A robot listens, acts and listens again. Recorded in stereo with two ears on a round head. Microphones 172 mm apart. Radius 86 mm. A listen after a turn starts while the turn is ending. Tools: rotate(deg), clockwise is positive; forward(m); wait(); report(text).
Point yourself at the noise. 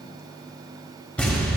rotate(-30)
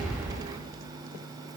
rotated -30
wait()
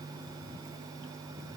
report("I heard an explosion, but can't make it out now. It was about 25° right or 145° left.")